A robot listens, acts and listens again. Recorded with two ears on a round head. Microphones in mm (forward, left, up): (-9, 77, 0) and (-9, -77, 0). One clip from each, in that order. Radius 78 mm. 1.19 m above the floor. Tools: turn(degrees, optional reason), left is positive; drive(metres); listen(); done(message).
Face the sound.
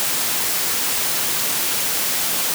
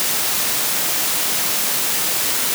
listen()
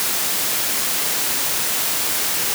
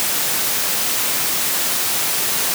listen()
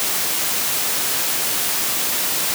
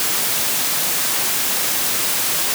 done("I can't make out anything.")